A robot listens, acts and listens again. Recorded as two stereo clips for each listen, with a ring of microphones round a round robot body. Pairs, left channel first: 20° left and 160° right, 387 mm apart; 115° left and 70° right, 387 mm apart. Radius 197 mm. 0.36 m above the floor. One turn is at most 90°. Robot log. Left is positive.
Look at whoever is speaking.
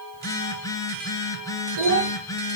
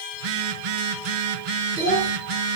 note: The child speaking: 150° right.
cmd yaw -90
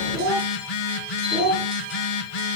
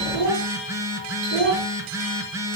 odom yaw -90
note: The child speaking is now 75° right.
cmd yaw -75
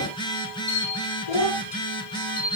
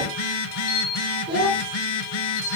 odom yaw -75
note: The child speaking is now 10° left.
cmd yaw +10
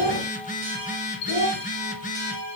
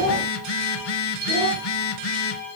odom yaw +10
end: Found it: a child speaking, straight ahead.